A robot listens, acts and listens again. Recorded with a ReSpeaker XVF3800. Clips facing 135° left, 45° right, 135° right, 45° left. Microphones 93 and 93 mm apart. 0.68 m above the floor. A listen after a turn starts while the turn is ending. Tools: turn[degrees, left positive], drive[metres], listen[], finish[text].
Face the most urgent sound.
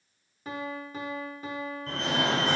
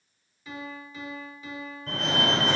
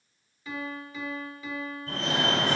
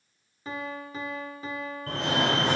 Thought: The fire alarm: 45° left.
Action: turn[45]
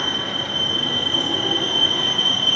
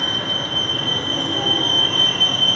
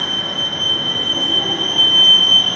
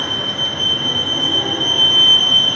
Action: finish[Found it: a fire alarm, straight ahead, over 4 m away.]